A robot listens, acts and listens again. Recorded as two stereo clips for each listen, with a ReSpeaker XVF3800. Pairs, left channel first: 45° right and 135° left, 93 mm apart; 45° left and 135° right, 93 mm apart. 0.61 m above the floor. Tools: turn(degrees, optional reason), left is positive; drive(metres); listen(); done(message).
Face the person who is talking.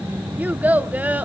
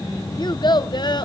turn(degrees=65, reason="The child speaking: 65° left.")
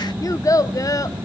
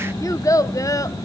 done("Facing the child speaking, under 1 m away.")